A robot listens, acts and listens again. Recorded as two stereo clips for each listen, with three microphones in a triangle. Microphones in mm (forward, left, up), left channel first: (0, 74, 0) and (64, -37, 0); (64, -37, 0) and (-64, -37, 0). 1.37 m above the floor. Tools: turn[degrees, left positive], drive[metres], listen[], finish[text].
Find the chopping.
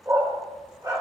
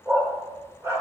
Action: listen[]
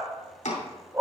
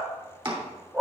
Thought: The chopping: 135° left.
Action: turn[135]
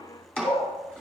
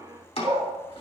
Thought: The chopping is now 40° left.
Action: turn[40]
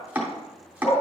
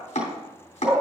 Thought: The chopping is now 15° left.
Action: turn[15]
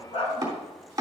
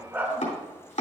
Action: finish[Found it: chopping, straight ahead, 2 to 4 m away.]